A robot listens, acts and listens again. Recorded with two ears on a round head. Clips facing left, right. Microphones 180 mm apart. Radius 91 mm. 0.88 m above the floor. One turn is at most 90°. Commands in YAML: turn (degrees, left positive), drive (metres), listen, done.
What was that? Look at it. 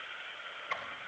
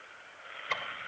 turn: -50
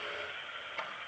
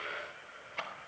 done: "Found it: ticking, straight ahead."